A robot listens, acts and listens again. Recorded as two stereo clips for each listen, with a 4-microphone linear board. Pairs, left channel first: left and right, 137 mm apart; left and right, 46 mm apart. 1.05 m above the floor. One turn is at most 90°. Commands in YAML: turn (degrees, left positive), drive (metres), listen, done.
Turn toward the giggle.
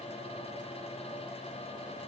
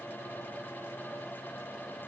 listen: true
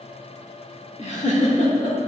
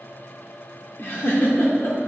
turn: 55
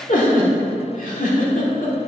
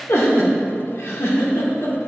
turn: 75
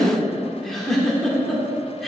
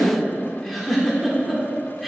done: "Found it: a giggle, straight ahead, 1 to 2 m away."